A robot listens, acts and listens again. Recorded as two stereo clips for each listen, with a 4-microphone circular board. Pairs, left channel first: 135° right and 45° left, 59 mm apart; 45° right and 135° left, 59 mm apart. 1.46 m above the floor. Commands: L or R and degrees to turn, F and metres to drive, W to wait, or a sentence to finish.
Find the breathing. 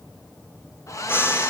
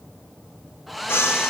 R90
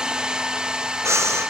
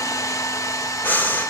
L15
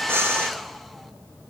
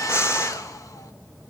Facing the breathing.